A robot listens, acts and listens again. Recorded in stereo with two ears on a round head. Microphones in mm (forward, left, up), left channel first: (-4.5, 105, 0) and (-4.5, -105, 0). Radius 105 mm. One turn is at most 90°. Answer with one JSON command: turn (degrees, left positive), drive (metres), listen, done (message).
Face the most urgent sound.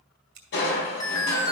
{"turn": 15}
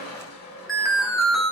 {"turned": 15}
{"done": "Found it: an alarm, straight ahead, 1 to 2 m away."}